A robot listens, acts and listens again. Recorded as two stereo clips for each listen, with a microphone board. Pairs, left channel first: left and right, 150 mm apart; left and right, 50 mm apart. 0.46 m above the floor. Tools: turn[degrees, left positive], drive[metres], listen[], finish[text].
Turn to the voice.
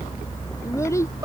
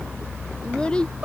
Thought: The child speaking: about 20° left or 160° left.
Action: turn[20]
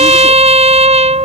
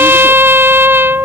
Action: listen[]
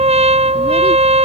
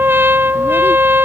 Action: listen[]
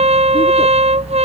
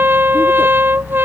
Action: finish[I heard a child speaking, but can't make it out now. It was about straight ahead or 140° left.]